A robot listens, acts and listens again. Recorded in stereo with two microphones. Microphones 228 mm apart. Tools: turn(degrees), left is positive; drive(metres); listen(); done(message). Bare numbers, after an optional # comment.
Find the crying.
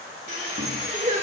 # The crying: about 35° right or 145° right.
turn(-35)
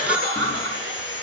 # So it is at 105° right.
turn(-105)
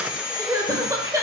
# The crying is now 15° right.
turn(-15)
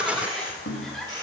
done("Facing the crying, 1 to 2 m away.")